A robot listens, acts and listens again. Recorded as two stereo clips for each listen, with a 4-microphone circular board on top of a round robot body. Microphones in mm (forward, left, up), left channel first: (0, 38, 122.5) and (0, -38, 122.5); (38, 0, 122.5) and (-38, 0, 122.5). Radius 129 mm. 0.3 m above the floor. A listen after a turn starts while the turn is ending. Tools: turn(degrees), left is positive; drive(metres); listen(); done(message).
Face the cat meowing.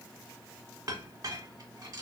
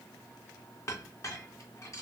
listen()
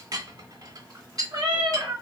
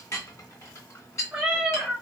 turn(degrees=-95)
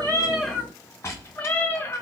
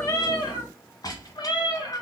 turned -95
turn(degrees=25)
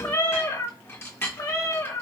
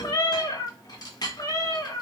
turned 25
turn(degrees=35)
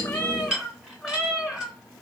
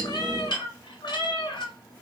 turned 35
done("Facing the cat meowing.")